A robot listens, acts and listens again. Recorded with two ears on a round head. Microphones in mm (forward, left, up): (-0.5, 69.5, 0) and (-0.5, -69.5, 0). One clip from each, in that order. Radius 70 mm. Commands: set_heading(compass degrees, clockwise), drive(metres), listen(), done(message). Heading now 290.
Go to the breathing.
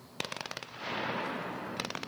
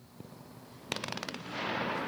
listen()
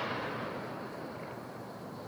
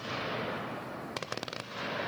listen()
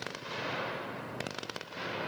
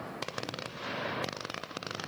done("I can't make out breathing.")